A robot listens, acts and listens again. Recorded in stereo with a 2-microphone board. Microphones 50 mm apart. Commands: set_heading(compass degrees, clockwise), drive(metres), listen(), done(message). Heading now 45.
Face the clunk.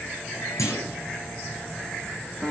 set_heading(315)
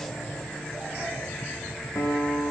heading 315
done("I heard a clunk from this way, but can't make it out now.")